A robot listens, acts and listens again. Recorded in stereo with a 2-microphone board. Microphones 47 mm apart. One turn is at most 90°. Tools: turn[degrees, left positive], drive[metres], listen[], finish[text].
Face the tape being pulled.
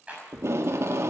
Thought: The tape being pulled: about 60° right or 120° right.
Action: turn[-60]
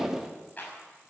Thought: So it is at 10° right.
Action: turn[-10]
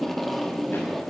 Action: finish[Facing the tape being pulled, 1 to 2 m away.]